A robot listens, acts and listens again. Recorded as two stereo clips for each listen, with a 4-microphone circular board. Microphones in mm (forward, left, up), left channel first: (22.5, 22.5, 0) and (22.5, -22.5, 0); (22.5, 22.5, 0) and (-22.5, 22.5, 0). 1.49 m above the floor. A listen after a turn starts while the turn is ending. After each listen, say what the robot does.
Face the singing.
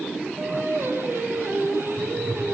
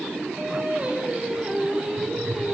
Turn 105° right.
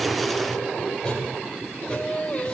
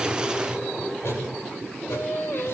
Turn 30° left.
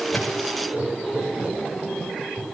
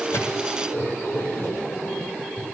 Keep listening.
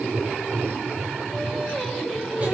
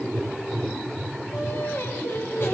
Found it: singing, straight ahead, 2 to 4 m away.